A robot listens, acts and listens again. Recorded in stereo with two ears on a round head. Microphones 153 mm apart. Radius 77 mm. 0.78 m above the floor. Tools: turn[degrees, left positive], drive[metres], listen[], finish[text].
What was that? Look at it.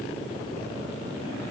Action: listen[]
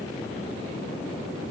Action: listen[]
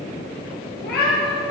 Thought: The cat meowing: about 65° left or 115° left.
Action: turn[65]
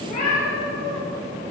Thought: So it is at 45° left.
Action: turn[45]
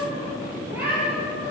Thought: The cat meowing is now 10° right.
Action: turn[-10]
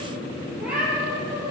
Thought: The cat meowing is now 10° right.
Action: turn[-10]
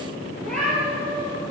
Action: finish[Found it: a cat meowing, straight ahead, over 4 m away.]